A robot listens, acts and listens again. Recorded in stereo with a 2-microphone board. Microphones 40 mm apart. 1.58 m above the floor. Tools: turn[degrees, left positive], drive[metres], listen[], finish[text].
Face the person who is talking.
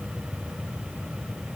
Action: listen[]
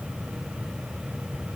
Action: listen[]
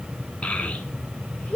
Thought: The child speaking: about 40° left or 140° left.
Action: turn[40]
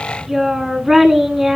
Action: finish[Facing the child speaking.]